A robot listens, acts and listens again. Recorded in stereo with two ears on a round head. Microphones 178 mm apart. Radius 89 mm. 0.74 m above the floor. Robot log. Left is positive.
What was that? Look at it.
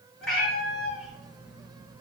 cmd yaw +30
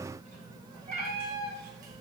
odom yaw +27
note: So it is at 55° right.
cmd yaw -55
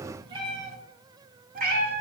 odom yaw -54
note: The cat meowing is now 50° right.
cmd yaw -50
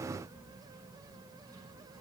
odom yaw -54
cmd idle
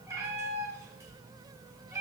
note: The cat meowing is now 15° right.
cmd yaw -15
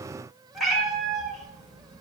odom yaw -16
end: Facing the cat meowing.